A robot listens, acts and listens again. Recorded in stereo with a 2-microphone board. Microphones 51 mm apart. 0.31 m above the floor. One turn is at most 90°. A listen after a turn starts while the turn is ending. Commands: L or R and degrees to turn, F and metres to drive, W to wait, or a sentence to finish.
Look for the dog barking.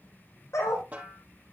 L90
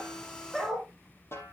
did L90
Found it: a dog barking, straight ahead.